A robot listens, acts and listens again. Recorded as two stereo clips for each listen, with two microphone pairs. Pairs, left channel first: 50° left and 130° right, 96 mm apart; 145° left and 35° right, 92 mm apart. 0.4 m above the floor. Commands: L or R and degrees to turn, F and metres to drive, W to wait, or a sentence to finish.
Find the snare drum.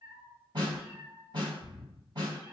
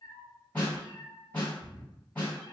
R145
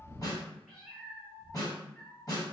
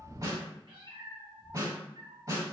Facing the snare drum, 1 to 2 m away.